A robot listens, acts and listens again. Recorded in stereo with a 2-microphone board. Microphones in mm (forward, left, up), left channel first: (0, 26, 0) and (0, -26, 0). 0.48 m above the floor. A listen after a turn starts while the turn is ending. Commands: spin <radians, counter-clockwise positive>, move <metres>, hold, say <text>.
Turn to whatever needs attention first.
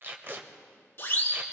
spin 0.79
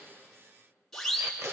say Facing the siren, 2 to 4 m away.